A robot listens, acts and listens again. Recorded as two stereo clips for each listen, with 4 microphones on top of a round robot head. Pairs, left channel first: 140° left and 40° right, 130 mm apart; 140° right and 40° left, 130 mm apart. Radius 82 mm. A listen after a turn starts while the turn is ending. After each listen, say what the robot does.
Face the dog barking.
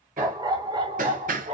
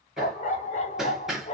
Turn 90° right.
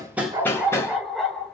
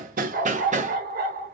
Turn 55° left.
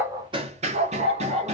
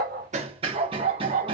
Found it: a dog barking, straight ahead, 1 to 2 m away.